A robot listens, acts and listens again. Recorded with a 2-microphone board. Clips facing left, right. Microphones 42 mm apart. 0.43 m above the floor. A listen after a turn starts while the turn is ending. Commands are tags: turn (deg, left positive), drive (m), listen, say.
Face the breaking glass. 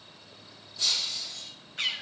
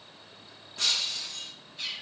<turn deg="-65"/>
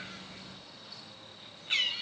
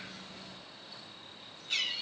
<listen/>
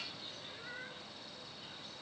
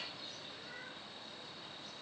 <say>I heard breaking glass, but can't make it out now. It was about straight ahead or 50° right.</say>